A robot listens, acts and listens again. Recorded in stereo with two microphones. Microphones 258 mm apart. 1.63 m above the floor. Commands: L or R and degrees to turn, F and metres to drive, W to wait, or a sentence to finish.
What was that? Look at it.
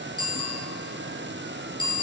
L15
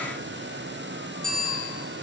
Found it: a bicycle bell, straight ahead, over 4 m away.